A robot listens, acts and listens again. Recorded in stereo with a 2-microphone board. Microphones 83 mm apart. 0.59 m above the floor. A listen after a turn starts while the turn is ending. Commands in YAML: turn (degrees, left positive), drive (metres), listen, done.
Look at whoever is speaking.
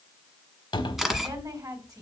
turn: -45
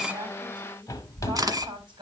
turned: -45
listen: true
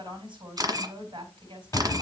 turn: -85
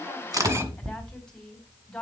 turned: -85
turn: 10
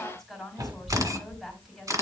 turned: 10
done: "Found it: a woman speaking, straight ahead."